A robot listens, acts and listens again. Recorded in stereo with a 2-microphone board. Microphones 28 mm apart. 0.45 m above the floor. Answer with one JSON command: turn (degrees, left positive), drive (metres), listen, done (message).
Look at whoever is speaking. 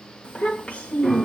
{"turn": 45}
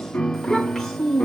{"turn": 15}
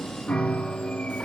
{"listen": true}
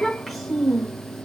{"done": "Facing the child speaking."}